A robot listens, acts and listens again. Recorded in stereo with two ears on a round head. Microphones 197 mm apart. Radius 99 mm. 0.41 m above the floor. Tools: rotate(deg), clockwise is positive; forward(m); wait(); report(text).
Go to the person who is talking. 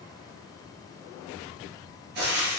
wait()
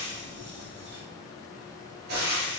wait()
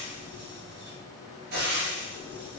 report("I can't make out anyone speaking to turn to.")